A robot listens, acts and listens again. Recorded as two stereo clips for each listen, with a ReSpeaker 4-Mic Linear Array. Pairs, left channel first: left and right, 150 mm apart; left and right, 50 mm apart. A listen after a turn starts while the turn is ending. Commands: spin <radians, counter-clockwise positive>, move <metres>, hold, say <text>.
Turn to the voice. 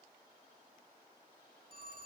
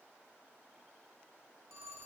hold
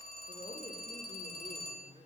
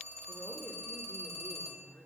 spin 0.87
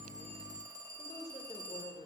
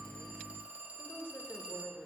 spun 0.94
spin 1.05
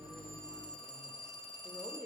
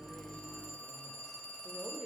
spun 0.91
say Found it: a woman speaking, straight ahead, 1 to 2 m away.